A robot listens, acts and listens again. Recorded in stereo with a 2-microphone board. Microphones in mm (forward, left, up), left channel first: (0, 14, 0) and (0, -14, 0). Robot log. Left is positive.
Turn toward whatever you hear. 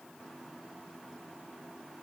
cmd idle
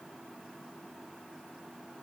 cmd idle
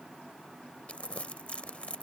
note: The crumpling: about 45° left or 135° left.
cmd yaw +45
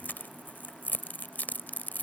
note: So it is at 90° left.
cmd yaw +90
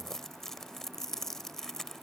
note: The crumpling is now 10° left.
cmd yaw +10
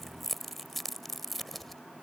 end: Facing the crumpling.